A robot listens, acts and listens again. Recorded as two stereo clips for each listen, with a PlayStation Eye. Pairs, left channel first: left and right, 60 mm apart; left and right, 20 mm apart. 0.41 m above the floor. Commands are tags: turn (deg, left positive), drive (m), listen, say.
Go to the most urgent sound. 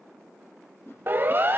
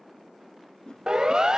<turn deg="-35"/>
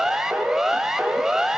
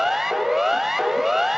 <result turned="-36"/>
<drive m="1.0"/>
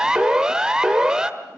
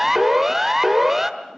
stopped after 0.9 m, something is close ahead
<turn deg="-15"/>
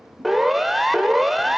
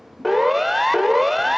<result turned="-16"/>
<say>I am next to the siren.</say>